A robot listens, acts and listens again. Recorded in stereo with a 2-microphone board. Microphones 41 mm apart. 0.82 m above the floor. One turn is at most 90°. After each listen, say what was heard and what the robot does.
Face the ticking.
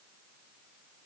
Keep listening.
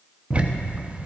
The ticking: about 30° right or 150° right. Turn 30° right.
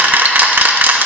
So it is at 115° right. Turn 90° right.
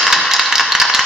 The ticking is now 15° right. Turn 15° right.
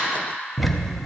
Facing the ticking, under 1 m away.